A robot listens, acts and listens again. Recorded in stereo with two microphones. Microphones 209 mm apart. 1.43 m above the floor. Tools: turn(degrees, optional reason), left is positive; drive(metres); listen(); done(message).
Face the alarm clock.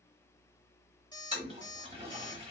turn(degrees=20, reason="The alarm clock: about 20° left or 160° left.")
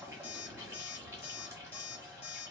turn(degrees=140, reason="So it is at 140° left.")
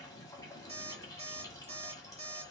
turn(degrees=-35, reason="The alarm clock is now 35° right.")
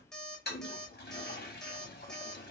done("Facing the alarm clock.")